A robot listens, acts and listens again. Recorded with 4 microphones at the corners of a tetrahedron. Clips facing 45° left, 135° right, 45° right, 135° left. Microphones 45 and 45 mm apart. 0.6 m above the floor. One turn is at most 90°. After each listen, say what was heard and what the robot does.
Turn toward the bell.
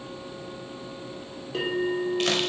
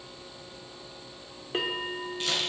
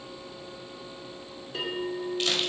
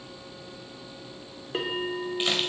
The bell: 175° left. Turn 90° left.
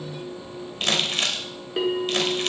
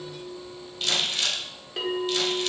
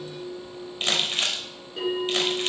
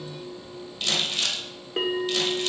The bell is now 120° left. Turn 90° left.
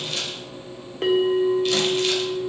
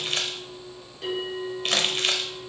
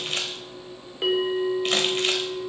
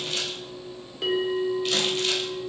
The bell is now 20° left. Turn 20° left.
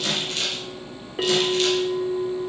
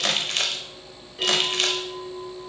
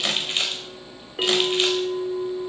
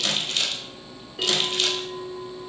Found it: a bell, straight ahead.